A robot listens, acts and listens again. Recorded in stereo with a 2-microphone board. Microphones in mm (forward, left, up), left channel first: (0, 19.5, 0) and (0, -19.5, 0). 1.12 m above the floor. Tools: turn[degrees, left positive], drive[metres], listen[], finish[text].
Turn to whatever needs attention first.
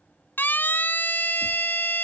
Thought: The siren: about 60° left or 120° left.
Action: turn[60]
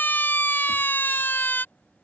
Thought: So it is at 65° left.
Action: turn[65]
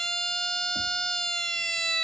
Thought: The siren is now 15° left.
Action: turn[15]
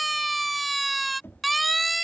Action: finish[Found it: a siren, straight ahead.]